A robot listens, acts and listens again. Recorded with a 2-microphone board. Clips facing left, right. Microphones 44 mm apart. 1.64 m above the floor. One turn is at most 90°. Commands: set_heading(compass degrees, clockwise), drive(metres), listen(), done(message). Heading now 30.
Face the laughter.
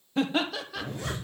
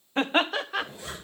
set_heading(65)
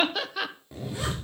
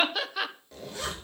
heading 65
done("Found it: laughter, straight ahead, 1 to 2 m away.")